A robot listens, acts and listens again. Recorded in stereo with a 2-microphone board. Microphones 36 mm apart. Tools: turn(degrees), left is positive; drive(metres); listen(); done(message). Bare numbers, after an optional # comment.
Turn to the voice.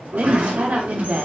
# The woman speaking: about 50° right or 130° right.
turn(-50)
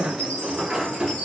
# So it is at 70° right.
turn(-70)
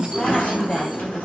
# The woman speaking is now 10° left.
turn(10)
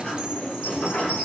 listen()
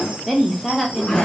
done("Facing the woman speaking.")